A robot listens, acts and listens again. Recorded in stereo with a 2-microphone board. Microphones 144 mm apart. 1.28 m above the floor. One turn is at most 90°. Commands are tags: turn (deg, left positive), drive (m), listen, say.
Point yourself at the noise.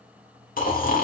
<turn deg="70"/>
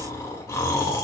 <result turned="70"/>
<turn deg="20"/>
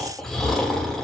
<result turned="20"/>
<say>Found it: snoring, straight ahead.</say>